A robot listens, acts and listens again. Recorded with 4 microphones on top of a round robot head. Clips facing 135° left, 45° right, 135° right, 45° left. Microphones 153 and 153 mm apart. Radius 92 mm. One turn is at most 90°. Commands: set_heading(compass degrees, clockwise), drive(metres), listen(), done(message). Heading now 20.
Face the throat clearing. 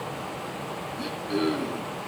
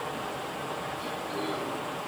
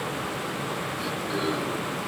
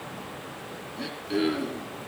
set_heading(290)
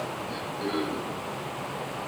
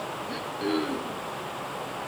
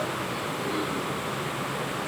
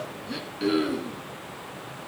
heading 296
set_heading(276)
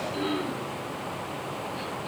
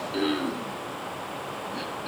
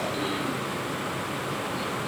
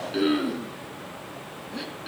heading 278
done("Facing the throat clearing, 2 to 4 m away.")